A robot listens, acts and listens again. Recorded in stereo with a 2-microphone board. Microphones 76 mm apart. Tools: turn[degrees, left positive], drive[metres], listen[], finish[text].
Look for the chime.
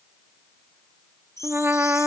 Thought: The chime: about 40° left or 140° left.
Action: turn[40]
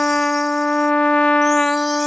Action: listen[]
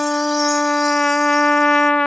Action: listen[]
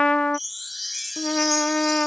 Action: finish[Found it: a chime, straight ahead.]